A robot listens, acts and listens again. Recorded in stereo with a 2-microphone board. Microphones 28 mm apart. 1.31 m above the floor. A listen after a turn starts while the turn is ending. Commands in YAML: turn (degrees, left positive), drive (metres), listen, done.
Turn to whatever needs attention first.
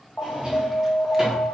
turn: 55
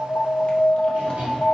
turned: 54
turn: 15
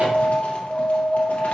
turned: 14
done: "Facing the alarm."